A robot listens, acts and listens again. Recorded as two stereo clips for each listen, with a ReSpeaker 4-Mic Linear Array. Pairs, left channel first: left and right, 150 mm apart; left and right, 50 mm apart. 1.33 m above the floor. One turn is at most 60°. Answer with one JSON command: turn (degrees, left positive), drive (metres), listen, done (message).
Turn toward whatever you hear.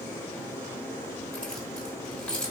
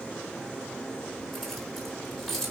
{"turn": 30}
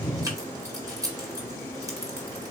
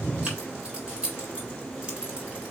{"turn": -25}
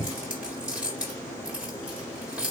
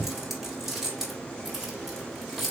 {"done": "Facing the keys jangling, 1 to 2 m away."}